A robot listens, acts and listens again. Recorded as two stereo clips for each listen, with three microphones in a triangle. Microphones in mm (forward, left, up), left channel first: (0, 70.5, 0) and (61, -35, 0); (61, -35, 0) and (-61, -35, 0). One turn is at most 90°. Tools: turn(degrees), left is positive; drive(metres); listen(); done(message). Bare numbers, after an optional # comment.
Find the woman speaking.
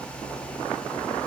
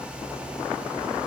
listen()
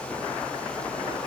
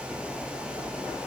listen()
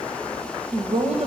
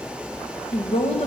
# The woman speaking: 30° right.
turn(-30)
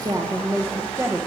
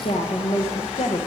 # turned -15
# The woman speaking is now 10° left.
turn(10)
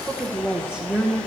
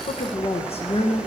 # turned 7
# The woman speaking is now 30° left.
turn(30)
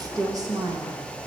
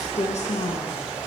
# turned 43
done("Facing the woman speaking.")